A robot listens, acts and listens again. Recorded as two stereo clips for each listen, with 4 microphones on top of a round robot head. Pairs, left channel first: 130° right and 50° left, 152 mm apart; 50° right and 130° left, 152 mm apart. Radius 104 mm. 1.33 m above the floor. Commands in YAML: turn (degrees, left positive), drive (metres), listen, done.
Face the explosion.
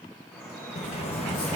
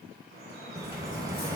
turn: -165
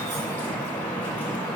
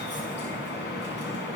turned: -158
turn: -10
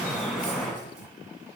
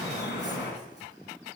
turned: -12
done: "I heard an explosion from this way, but can't make it out now."